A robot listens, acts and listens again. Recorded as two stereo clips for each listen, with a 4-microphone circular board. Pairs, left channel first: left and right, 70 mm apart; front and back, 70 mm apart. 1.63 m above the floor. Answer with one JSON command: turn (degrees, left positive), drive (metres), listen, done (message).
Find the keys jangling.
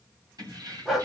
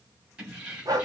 {"turn": -115}
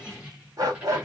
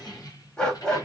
{"turn": -20}
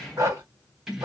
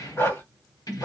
{"done": "Facing the keys jangling."}